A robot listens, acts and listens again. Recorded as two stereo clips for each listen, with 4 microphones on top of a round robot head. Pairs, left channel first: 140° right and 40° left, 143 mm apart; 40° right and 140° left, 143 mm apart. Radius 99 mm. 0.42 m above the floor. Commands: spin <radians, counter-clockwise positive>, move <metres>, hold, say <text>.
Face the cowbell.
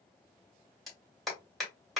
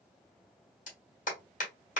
hold
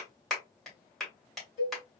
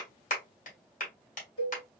spin -1.66
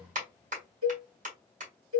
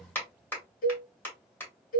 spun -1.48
spin -0.17
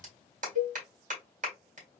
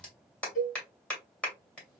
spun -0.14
say Found it: a cowbell, straight ahead.